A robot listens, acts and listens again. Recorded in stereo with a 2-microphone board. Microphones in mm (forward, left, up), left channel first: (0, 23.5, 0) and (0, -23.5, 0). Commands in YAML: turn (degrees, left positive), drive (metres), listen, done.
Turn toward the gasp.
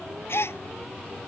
turn: 65
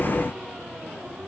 listen: true
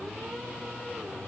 done: "I heard a gasp, but can't make it out now. It was about straight ahead or 50° left."